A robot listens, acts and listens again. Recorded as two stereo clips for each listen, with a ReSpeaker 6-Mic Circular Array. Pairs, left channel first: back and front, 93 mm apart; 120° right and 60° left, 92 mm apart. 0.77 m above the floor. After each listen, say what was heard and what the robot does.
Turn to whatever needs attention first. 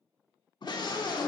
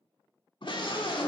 The scream: 145° right. Turn 145° right.
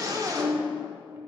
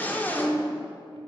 The scream is now 50° right. Turn 50° right.
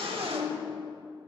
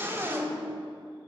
Found it: a scream, straight ahead.